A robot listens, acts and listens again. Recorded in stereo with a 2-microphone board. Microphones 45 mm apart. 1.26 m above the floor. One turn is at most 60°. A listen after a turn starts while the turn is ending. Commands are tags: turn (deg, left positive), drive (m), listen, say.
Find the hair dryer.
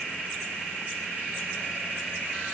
<listen/>
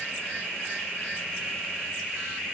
<listen/>
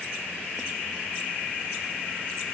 <say>I can't make out a hair dryer.</say>